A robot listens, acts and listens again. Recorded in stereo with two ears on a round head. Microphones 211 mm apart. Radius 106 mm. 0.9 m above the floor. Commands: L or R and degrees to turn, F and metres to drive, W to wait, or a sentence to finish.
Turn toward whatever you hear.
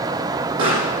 R55
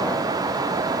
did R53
W
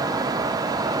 I heard a pop, but can't make it out now. It was about straight ahead or 75° right.